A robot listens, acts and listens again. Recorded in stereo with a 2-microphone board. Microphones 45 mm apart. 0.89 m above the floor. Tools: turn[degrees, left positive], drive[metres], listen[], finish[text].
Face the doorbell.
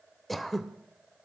Action: listen[]
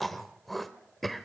Action: listen[]
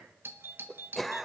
Thought: The doorbell: about 55° right or 125° right.
Action: turn[-55]
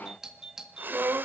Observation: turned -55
Thought: So it is at 10° right.
Action: turn[-10]
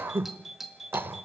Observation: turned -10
Action: finish[Facing the doorbell, 1 to 2 m away.]